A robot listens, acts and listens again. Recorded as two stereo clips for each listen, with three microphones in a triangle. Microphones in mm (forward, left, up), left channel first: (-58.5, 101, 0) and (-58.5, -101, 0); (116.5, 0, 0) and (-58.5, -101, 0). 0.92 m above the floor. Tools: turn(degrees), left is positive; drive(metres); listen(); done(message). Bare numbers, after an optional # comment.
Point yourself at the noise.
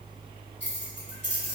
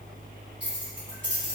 # The keys jangling: 120° right.
turn(-120)
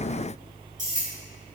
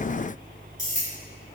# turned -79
# The keys jangling is now 40° right.
turn(-40)
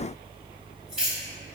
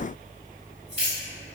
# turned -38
done("Facing the keys jangling.")